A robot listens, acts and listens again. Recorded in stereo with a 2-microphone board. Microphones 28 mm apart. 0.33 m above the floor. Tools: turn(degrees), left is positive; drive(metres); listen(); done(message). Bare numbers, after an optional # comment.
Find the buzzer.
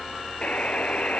# The buzzer: about 45° left or 135° left.
turn(45)
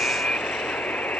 # So it is at 95° left.
turn(95)
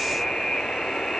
# The buzzer is now 25° left.
turn(25)
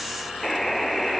done("Found it: a buzzer, straight ahead.")